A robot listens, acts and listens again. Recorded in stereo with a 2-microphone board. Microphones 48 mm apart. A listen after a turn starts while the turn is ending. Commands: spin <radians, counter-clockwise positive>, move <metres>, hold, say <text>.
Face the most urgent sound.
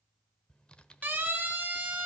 spin -0.61
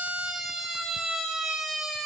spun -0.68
say Found it: a siren, straight ahead, 2 to 4 m away.